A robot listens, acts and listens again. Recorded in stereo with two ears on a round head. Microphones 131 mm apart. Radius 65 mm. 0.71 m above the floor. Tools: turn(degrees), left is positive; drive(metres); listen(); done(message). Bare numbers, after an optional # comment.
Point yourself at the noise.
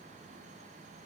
listen()
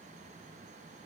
listen()
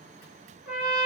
turn(-30)
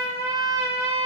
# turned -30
# So it is at 145° right.
turn(-145)
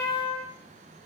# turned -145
# The trumpet is now 15° left.
turn(15)
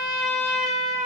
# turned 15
done("Found it: a trumpet, straight ahead, 1 to 2 m away.")